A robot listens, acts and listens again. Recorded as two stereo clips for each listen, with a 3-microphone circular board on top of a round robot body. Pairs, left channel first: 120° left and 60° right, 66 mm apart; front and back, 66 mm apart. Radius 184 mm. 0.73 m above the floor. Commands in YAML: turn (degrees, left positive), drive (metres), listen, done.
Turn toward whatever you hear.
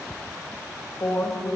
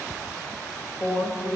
turn: 75
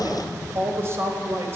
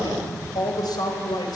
turn: -10
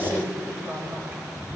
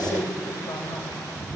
done: "Found it: a woman speaking, straight ahead, over 4 m away."